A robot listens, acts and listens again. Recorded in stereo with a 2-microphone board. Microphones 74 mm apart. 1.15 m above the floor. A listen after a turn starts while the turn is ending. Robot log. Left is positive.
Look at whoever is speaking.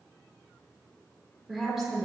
cmd yaw -30
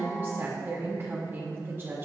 note: So it is at 150° right.
cmd yaw -150
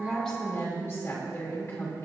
note: The woman speaking is now 35° left.
cmd yaw +35
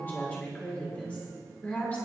note: The woman speaking is now 20° left.
cmd yaw +20
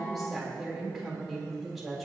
end: Facing the woman speaking.